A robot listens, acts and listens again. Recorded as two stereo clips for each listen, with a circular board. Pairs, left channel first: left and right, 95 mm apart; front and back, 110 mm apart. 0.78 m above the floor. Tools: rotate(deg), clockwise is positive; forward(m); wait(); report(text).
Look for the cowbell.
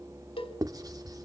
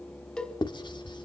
rotate(-80)
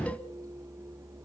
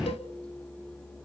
wait()
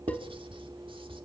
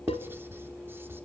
wait()
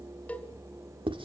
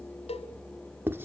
rotate(-15)
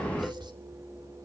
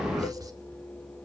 wait()
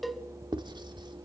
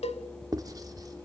report("Found it: a cowbell, straight ahead.")